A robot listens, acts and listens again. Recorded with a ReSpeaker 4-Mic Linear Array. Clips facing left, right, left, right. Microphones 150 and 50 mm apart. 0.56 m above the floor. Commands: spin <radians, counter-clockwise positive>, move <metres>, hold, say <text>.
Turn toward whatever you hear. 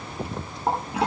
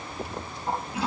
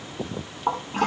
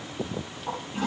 spin 1.31
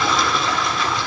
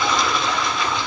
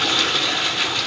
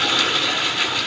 say Facing the toilet flushing, over 4 m away.